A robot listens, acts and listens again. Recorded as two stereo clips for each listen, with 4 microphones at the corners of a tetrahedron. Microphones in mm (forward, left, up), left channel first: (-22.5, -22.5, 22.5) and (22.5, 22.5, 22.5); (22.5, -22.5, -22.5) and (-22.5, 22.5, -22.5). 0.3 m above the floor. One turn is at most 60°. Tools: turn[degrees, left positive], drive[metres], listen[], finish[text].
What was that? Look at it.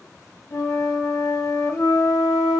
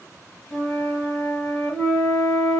Thought: The flute: 120° right.
Action: turn[-60]
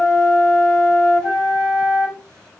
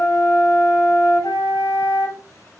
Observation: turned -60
Thought: The flute is now 55° right.
Action: turn[-55]
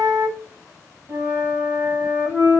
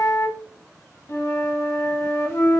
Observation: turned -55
Action: finish[Found it: a flute, straight ahead.]